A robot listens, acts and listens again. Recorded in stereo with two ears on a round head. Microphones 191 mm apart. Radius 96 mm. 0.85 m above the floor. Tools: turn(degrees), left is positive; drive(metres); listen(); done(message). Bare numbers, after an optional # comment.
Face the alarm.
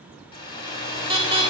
# The alarm: about 15° right or 165° right.
turn(-15)
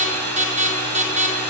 # So it is at 150° right.
turn(-150)
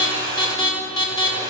# The alarm is now 20° left.
turn(20)
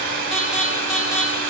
done("Facing the alarm.")